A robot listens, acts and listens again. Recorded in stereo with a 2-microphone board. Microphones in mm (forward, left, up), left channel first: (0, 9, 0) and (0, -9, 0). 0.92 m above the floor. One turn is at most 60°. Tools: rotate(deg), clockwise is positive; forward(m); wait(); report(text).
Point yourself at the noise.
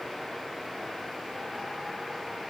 wait()
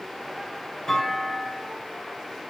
rotate(-35)
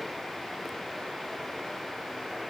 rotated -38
wait()
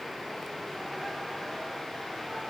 report("I heard a clunk, but can't make it out now. It was about 5° right or 110° left.")